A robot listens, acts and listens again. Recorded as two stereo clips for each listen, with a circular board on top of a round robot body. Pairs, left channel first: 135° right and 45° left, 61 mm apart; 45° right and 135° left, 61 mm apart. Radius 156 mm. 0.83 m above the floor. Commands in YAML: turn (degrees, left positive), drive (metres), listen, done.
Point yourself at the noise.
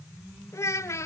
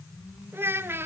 turn: -175
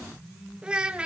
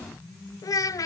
turn: -30
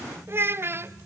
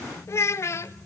done: "Found it: a child speaking, straight ahead, 1 to 2 m away."